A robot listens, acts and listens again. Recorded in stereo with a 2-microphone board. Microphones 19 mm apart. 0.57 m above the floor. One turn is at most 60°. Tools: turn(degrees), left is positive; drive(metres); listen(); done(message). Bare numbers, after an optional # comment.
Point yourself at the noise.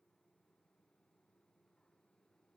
listen()
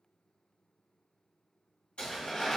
# The tearing paper: about 65° left or 115° left.
turn(60)
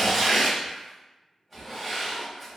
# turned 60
done("Found it: tearing paper, straight ahead, 1 to 2 m away.")